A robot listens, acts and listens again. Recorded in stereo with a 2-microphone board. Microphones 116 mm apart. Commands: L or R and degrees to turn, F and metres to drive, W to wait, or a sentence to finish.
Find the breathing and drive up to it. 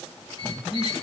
R20
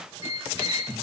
R140
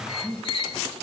R50
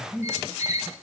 R10
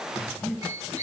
F1.0
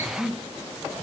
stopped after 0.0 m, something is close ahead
Blocked. The breathing is further on, straight ahead.